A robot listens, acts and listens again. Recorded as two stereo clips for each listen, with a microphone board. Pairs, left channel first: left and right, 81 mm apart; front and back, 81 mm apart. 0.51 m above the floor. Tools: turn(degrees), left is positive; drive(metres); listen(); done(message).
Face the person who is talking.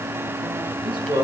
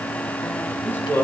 turn(degrees=-65)
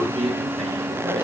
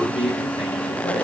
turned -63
done("Found it: a man speaking, straight ahead, over 4 m away.")